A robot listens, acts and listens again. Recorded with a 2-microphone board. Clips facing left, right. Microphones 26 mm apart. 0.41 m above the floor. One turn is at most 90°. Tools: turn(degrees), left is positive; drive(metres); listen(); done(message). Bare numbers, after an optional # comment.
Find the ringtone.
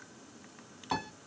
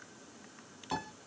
listen()
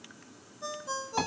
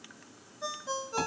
# The ringtone: about 35° right or 145° right.
turn(-35)
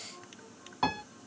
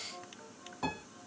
# So it is at 105° right.
turn(-90)
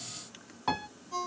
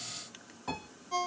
# The ringtone is now 55° right.
turn(-55)
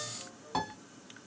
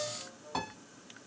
done("Facing the ringtone, 1 to 2 m away.")